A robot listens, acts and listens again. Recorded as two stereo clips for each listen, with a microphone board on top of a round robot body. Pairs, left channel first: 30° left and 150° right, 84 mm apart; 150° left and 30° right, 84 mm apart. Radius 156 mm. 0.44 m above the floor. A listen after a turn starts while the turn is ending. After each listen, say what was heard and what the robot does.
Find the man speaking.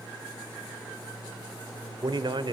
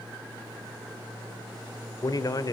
The man speaking: 170° right. Turn 170° right.
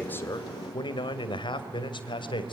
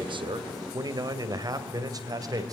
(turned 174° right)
The man speaking is now 15° left. Turn 15° left.
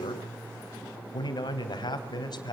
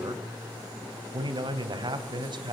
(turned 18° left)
Facing the man speaking, 2 to 4 m away.